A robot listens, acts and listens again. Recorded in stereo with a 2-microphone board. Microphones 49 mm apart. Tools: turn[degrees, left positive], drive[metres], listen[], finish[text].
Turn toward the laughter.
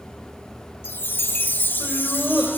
Thought: The laughter: about 20° right or 160° right.
Action: turn[-20]
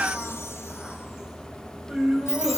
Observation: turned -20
Action: turn[-30]
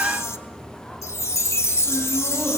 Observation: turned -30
Action: listen[]
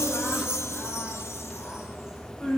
Thought: So it is at 15° left.
Action: turn[15]
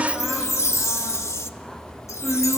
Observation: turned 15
Action: finish[Facing the laughter, over 4 m away.]